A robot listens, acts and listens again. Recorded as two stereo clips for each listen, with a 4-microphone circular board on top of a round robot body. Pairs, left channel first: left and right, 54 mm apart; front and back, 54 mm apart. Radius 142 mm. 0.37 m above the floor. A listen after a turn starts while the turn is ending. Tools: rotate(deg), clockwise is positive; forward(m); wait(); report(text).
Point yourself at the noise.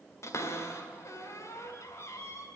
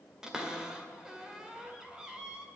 rotate(-105)
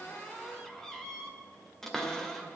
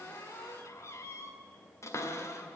report("Found it: a cupboard door, straight ahead.")